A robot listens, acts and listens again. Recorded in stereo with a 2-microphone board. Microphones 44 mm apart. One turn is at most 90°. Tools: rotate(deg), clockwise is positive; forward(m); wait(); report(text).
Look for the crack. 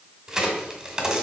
rotate(15)
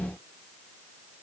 wait()
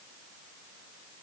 report("I heard a crack, but can't make it out now. It was about straight ahead or 150° right.")